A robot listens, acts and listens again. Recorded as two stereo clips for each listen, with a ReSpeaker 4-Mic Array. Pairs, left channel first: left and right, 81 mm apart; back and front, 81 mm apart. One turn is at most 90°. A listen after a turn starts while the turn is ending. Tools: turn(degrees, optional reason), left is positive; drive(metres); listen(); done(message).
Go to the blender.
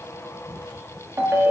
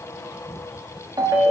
listen()
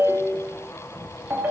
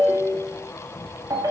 listen()
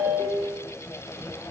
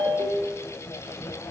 done("I can't make out a blender to turn to.")